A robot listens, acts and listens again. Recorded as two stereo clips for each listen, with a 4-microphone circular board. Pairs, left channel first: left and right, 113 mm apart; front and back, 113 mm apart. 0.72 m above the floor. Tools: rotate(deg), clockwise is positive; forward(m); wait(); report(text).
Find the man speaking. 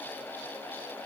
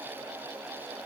wait()
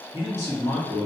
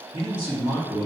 rotate(140)
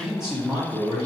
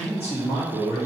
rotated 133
report("Found it: a man speaking, straight ahead, 1 to 2 m away.")